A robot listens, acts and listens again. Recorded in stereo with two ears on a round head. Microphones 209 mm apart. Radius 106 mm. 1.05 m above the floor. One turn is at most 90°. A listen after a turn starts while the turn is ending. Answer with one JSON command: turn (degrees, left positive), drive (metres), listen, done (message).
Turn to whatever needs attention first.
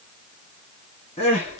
{"turn": 25}
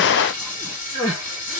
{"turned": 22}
{"done": "Found it: crying, straight ahead, 2 to 4 m away."}